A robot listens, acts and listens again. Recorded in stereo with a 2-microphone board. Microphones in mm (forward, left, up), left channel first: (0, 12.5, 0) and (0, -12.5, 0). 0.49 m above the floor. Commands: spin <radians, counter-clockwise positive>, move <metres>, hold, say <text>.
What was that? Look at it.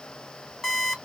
spin 0.52
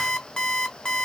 spin 2.36
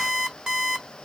spin -0.35
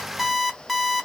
say Found it: an alarm clock, straight ahead, under 1 m away.